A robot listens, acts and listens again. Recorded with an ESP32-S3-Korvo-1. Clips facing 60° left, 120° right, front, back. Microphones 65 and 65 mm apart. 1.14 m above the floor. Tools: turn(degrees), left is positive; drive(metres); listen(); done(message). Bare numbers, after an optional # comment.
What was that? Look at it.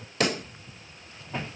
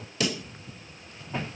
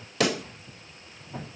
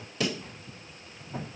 # The pop: 20° left.
turn(20)
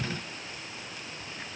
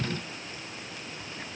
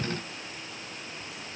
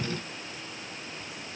done("I heard a pop from this way, but can't make it out now.")